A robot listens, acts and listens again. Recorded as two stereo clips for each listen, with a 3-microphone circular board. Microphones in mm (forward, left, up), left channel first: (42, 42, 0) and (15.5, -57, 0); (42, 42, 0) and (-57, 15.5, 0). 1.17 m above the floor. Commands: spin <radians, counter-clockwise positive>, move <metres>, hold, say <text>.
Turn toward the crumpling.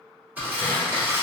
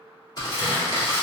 spin -0.52
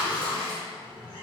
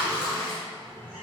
say Found it: crumpling, straight ahead.